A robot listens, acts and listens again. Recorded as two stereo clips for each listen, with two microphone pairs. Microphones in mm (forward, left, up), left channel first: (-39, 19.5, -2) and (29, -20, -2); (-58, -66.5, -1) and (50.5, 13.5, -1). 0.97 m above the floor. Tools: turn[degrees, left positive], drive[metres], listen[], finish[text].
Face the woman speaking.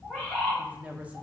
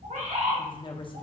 Thought: The woman speaking: 100° right.
Action: turn[-100]
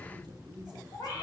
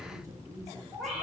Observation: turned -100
Thought: The woman speaking is now 25° right.
Action: turn[-25]
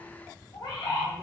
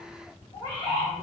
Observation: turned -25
Action: listen[]
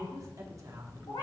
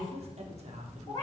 Thought: The woman speaking is now 10° left.
Action: turn[10]
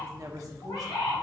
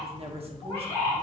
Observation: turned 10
Action: finish[Facing the woman speaking.]